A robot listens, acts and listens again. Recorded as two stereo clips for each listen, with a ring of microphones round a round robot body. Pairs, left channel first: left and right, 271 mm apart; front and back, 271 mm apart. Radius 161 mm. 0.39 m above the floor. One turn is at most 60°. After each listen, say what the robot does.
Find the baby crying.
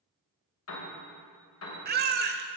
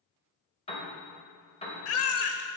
Turn 35° right.
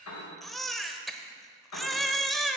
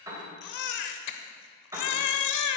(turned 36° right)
Found it: a baby crying, straight ahead.